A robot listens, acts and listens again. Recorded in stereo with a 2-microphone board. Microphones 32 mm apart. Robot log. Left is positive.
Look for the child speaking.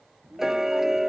note: The child speaking: about 60° right or 120° right.
cmd yaw -60
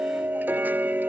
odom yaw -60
cmd idle
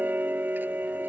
cmd idle
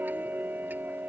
end: I heard a child speaking, but can't make it out now. It was about straight ahead or 60° right.